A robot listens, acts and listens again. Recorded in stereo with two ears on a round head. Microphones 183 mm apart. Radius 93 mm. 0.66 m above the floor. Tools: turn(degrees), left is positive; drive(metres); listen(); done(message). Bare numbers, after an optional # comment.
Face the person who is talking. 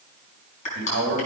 # The man speaking: about 60° right or 120° right.
turn(-60)
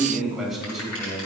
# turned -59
done("Found it: a man speaking, straight ahead, over 4 m away.")